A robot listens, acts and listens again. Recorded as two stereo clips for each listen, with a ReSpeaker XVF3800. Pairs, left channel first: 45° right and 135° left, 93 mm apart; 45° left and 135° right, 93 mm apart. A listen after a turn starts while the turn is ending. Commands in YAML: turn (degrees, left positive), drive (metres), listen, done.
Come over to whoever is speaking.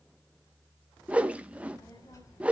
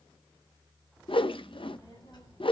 turn: 10
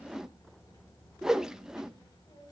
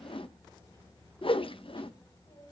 drive: 1.0
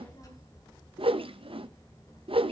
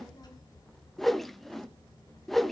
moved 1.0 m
drive: 1.0
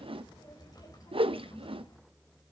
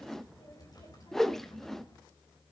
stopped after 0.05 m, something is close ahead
done: "Something is in my way. I am facing the child speaking but have not reached it."